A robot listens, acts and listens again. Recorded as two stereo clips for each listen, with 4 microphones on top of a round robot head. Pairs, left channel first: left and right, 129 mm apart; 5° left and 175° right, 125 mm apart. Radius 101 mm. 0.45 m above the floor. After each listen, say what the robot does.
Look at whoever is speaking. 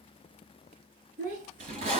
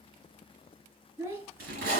Turn 95° right.
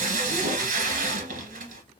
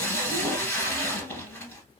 Keep listening.
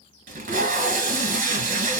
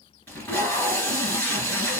Keep listening.
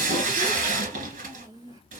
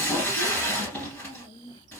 Turn 30° right.
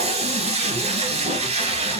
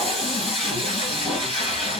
Keep listening.
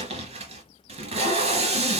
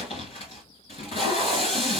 Keep listening.
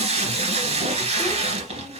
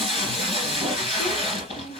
I heard a child speaking from this way, but can't make it out now.